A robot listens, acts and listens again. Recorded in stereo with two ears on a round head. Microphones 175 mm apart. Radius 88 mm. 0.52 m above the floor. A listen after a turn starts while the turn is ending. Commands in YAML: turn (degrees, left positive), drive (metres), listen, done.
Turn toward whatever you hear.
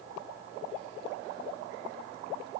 listen: true
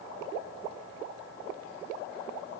listen: true
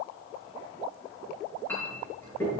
turn: 30
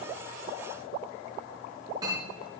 turn: -20
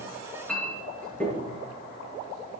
done: "Facing the clink, over 4 m away."